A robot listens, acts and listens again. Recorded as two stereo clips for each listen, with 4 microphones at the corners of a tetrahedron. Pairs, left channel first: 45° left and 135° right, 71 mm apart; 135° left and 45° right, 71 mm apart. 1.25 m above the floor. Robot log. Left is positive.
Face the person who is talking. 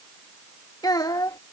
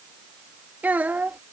note: The child speaking: 20° left.
cmd yaw +20
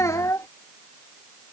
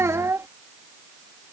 end: Found it: a child speaking, straight ahead.